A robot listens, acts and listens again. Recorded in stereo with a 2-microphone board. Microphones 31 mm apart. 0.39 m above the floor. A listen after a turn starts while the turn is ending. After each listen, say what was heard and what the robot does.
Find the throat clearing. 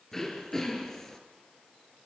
Turn 30° left.
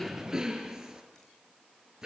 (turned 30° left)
So it is at 20° right. Turn 20° right.
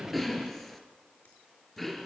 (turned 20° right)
Found it: throat clearing, straight ahead, 2 to 4 m away.